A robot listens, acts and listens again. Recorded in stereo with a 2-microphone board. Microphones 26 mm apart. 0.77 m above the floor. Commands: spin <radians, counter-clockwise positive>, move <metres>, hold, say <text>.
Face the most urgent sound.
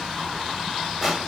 hold
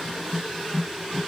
hold
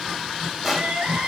spin -1.57
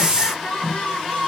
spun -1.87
spin 0.52
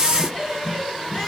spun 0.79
spin -0.26
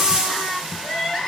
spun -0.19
say Facing the crying.